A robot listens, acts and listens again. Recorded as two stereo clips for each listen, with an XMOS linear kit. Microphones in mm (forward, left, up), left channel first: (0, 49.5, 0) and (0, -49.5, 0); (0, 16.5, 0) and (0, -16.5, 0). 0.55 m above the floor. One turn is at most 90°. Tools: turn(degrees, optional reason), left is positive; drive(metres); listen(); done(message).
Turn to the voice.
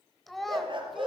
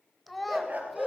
turn(degrees=30)
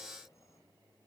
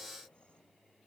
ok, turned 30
listen()
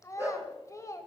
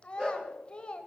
turn(degrees=90, reason="So it is at 150° left.")
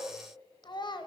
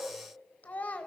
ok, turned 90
turn(degrees=50, reason="The child speaking is now 50° left.")
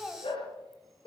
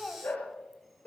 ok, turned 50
done("Facing the child speaking, 1 to 2 m away.")